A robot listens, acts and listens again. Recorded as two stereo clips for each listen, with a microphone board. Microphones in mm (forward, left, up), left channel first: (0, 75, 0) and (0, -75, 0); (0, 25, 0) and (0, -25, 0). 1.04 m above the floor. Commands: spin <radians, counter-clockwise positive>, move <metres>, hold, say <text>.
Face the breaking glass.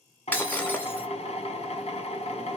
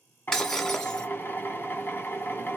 spin 0.52
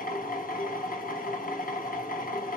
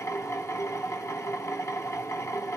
hold
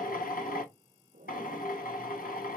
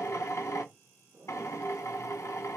say I heard breaking glass, but can't make it out now. It was about 20° right or 140° left.